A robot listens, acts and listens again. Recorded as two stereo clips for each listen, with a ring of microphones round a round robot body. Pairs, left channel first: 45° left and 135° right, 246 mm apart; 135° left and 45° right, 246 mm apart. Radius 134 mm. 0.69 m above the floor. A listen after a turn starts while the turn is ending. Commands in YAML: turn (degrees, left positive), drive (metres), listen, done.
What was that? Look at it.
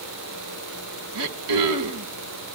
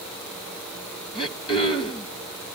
turn: -155
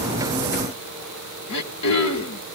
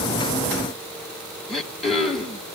turn: 45
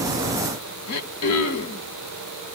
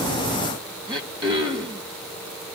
turn: 25
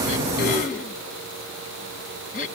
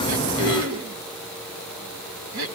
turn: -10
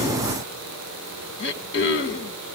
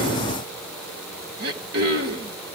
done: "Found it: throat clearing, straight ahead, 1 to 2 m away."